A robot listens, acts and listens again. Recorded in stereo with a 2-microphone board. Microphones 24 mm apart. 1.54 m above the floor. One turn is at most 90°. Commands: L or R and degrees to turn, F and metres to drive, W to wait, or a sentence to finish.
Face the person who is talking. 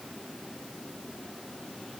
W
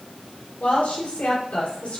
L60
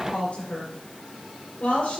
L65
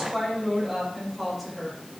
Facing the woman speaking, over 4 m away.